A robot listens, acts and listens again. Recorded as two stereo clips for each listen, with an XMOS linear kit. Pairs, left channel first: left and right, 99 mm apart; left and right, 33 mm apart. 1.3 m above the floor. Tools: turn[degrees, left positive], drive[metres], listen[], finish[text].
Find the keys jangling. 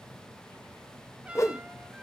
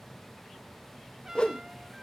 Action: listen[]
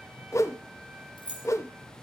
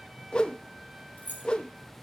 Thought: The keys jangling: about 60° left or 120° left.
Action: turn[60]
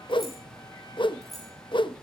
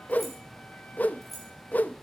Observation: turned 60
Action: finish[Facing the keys jangling, over 4 m away.]